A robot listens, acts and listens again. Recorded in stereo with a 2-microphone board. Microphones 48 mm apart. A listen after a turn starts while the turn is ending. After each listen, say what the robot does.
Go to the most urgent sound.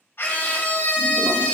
Turn 50° left.
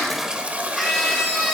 Drive 1.0 m forward.
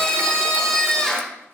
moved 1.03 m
Turn 15° left.
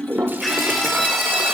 Drive 1.0 m forward.
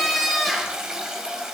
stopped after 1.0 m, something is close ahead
Arrived at the scream, straight ahead.